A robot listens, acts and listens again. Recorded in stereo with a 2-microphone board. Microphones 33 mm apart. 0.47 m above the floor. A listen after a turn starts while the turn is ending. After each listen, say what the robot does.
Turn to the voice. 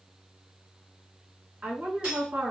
Turn 55° right.
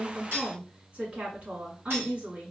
Turn 50° right.
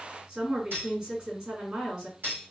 Turn 35° right.
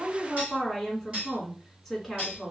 Found it: a woman speaking, straight ahead.